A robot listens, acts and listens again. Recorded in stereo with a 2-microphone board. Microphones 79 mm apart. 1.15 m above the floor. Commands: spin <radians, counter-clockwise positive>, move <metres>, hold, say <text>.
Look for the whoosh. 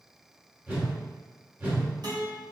spin -0.35
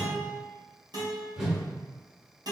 say Facing the whoosh.